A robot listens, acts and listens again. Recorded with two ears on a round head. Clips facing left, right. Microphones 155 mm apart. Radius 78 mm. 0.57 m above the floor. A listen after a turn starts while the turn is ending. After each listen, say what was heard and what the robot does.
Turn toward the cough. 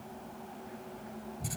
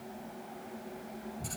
Keep listening.
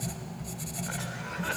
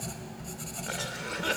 The cough: about 40° right or 140° right. Turn 40° right.
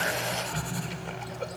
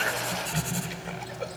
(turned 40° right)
Found it: a cough, straight ahead, 1 to 2 m away.